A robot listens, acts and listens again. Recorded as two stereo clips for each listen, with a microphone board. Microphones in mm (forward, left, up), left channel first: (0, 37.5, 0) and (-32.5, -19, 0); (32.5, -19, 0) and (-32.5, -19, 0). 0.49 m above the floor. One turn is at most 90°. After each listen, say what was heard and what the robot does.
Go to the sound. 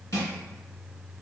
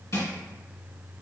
The crushing: 30° left. Turn 30° left.
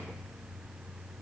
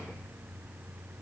Keep listening.
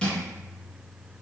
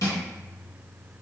The crushing is now 15° right. Turn 15° right.
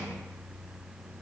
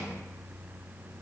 Keep listening.
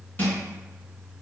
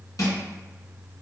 Drive 1.0 m forward.
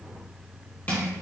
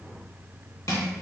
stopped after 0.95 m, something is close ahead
Arrived at the crushing, straight ahead.